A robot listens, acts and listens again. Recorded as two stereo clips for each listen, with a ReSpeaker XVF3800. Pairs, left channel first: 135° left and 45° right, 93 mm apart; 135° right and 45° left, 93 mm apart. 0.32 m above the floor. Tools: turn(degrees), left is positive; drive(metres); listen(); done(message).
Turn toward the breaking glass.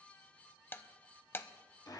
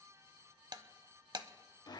turn(degrees=75)
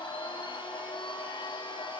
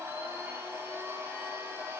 done("I heard breaking glass from this way, but can't make it out now.")